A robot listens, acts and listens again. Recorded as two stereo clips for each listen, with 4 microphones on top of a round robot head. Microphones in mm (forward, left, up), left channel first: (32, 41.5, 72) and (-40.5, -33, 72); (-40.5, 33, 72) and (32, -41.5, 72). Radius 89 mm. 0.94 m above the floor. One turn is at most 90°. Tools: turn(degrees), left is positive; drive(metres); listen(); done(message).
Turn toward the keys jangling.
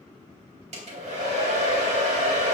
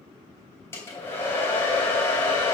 listen()
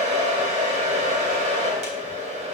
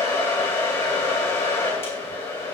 listen()
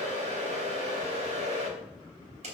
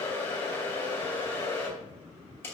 done("I can't make out keys jangling, only a hair dryer.")